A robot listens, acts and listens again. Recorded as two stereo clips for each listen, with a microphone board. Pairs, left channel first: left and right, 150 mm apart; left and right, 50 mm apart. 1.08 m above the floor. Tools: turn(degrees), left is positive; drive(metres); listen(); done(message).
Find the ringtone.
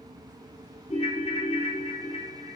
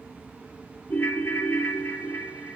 turn(degrees=50)
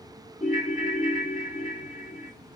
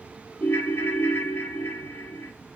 turn(degrees=80)
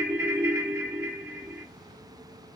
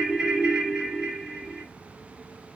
turn(degrees=-15)
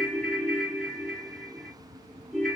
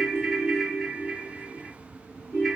done("Found it: a ringtone, straight ahead, 1 to 2 m away.")